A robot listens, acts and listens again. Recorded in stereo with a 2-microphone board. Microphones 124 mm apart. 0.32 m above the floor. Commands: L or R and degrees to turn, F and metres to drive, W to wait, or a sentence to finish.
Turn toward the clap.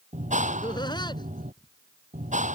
R90
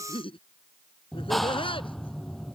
Found it: a clap, straight ahead.